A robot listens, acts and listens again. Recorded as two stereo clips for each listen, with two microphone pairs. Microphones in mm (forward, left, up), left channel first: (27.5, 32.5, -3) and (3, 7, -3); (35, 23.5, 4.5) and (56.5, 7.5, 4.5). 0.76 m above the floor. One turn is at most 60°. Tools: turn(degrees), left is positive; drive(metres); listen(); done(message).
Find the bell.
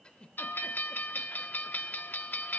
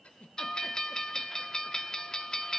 turn(degrees=60)
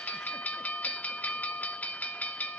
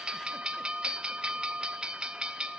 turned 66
turn(degrees=10)
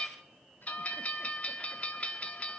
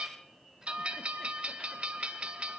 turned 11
done("Found it: a bell, straight ahead, under 1 m away.")